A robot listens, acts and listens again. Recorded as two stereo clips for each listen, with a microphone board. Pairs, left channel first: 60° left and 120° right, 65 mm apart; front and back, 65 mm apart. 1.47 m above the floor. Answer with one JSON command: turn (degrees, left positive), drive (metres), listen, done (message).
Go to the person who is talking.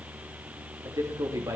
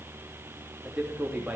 {"turn": -110}
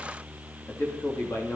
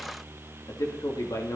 {"turn": 10}
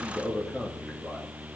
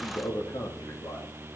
{"drive": 1.0}
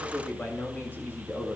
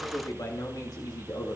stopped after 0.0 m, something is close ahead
{"done": "Something is in my way. I am facing the man speaking but have not reached it."}